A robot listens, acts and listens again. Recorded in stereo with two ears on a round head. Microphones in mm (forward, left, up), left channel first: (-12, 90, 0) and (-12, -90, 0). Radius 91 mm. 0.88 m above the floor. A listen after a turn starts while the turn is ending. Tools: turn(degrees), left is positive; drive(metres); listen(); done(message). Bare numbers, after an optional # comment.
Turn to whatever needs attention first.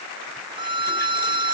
listen()
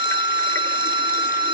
listen()
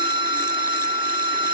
done("I can't make out anything urgent to turn to.")